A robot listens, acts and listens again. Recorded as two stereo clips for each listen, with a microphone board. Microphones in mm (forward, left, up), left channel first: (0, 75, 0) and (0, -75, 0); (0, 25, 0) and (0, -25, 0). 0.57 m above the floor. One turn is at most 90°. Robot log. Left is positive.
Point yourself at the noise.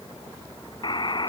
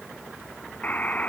note: The buzzer: about 30° left or 150° left.
cmd yaw +30
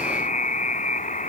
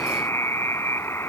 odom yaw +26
note: So it is at 120° left.
cmd yaw +90
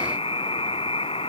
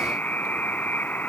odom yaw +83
note: The buzzer is now 40° left.
cmd yaw +40
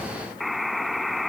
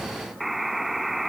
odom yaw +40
end: Facing the buzzer.